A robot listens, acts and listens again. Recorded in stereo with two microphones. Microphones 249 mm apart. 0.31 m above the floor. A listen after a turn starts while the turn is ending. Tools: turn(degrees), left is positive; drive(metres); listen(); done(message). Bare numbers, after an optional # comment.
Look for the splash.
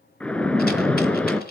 turn(30)
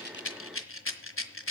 listen()
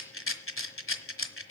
done("I heard a splash, but can't make it out now. It was about 25° right or 145° left.")